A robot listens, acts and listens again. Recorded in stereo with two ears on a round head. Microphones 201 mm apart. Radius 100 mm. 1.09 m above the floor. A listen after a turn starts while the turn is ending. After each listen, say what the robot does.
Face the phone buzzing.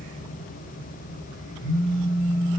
Turn 90° left.
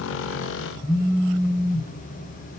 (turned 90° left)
Facing the phone buzzing.